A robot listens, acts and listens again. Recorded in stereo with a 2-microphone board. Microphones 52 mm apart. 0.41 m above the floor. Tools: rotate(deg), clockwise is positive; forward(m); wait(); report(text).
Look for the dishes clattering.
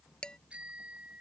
rotate(-15)
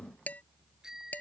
rotate(-150)
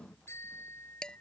rotate(-15)
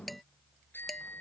report("Facing the dishes clattering.")